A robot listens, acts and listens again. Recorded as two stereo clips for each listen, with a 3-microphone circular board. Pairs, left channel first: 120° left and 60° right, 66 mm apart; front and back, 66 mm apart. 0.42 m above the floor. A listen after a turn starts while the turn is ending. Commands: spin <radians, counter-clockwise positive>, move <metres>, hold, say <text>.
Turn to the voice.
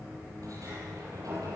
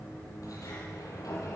hold
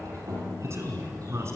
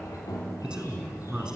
spin -1.83
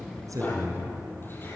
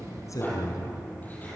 spin -0.17
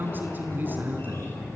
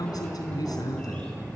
say Found it: a man speaking, straight ahead, over 4 m away.